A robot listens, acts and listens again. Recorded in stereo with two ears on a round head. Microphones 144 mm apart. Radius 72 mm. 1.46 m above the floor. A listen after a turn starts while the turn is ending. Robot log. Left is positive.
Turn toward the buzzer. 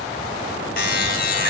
note: The buzzer: about 55° left or 125° left.
cmd yaw +55
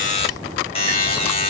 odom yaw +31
note: So it is at 45° left.
cmd yaw +45
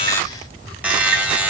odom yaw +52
note: The buzzer is now 10° right.
cmd yaw -10
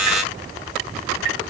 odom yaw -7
end: Found it: a buzzer, straight ahead.